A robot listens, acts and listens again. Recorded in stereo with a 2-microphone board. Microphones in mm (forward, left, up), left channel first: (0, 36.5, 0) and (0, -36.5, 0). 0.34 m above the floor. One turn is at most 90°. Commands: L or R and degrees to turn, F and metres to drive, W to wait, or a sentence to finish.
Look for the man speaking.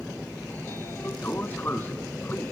W
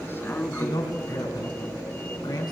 L70
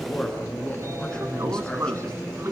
L10
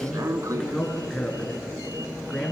Facing the man speaking.